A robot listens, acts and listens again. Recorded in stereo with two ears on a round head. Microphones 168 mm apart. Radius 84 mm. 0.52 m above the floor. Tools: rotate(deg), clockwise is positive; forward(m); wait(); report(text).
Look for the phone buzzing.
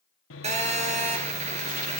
rotate(40)
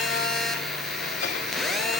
report("Found it: a phone buzzing, straight ahead, 2 to 4 m away.")